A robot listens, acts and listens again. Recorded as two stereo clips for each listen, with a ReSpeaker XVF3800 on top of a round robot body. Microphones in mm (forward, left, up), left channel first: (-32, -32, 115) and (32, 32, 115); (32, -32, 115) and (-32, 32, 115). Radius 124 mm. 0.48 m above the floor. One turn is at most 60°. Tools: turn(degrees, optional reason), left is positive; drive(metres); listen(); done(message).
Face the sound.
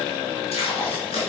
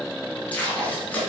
turn(degrees=-60, reason="The tape being pulled: 120° right.")
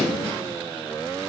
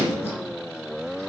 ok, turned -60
turn(degrees=-60, reason="Nothing new. It was at 60° right.")
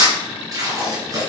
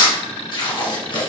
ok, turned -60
done("Facing the tape being pulled, 2 to 4 m away.")